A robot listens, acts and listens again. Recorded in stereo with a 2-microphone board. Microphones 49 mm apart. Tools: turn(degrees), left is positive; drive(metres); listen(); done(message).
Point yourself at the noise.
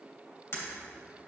turn(degrees=65)
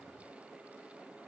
listen()
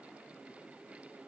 done("I heard breaking glass, but can't make it out now. It was about straight ahead or 50° left.")